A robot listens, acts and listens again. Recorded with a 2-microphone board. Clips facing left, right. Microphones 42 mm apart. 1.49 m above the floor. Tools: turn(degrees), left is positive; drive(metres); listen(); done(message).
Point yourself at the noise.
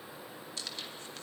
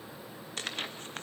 turn(degrees=-50)
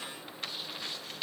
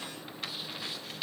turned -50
done("Found it: tearing paper, straight ahead, 1 to 2 m away.")